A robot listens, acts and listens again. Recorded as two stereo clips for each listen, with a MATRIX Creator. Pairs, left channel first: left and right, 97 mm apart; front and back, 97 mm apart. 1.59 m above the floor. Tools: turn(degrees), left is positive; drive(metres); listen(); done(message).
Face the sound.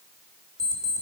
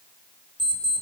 turn(degrees=-140)
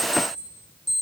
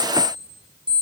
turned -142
done("Found it: an alarm clock, straight ahead, 2 to 4 m away.")